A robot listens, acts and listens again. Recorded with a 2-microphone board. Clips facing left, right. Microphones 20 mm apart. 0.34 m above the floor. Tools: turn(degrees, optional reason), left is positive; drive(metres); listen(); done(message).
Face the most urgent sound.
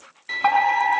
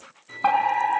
turn(degrees=30)
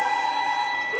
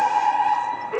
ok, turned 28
turn(degrees=-15, reason="So it is at 15° right.")
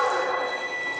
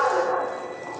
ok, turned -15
done("Found it: a fire alarm, straight ahead, over 4 m away.")